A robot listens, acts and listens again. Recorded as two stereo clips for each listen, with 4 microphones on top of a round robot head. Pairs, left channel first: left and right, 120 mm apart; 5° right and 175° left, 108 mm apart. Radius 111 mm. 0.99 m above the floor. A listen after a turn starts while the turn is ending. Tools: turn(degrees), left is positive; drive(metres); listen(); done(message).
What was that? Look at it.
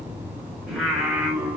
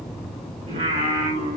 turn(degrees=-175)
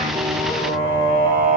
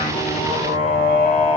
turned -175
turn(degrees=-50)
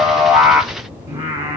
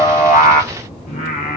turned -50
turn(degrees=-30)
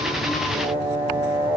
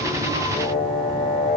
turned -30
turn(degrees=-15)
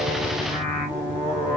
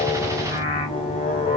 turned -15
done("Facing the singing.")